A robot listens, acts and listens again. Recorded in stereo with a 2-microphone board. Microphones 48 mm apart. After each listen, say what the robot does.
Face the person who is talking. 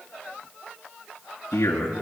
Turn 90° left.
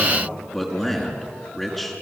Facing the man speaking.